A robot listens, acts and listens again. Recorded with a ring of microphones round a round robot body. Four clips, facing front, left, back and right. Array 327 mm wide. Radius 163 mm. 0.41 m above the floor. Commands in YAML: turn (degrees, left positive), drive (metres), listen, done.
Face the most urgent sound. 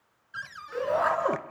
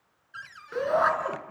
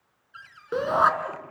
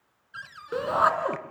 turn: -155
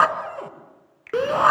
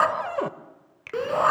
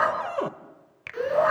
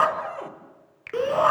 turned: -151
done: "Facing the shout, 2 to 4 m away."